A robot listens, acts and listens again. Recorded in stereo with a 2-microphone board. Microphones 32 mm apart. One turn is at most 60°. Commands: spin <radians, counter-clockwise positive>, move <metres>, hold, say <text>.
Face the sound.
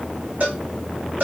spin -1.05
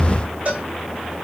spin -0.96
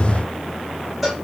spin -0.17
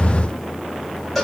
say Found it: a cowbell, straight ahead, 2 to 4 m away.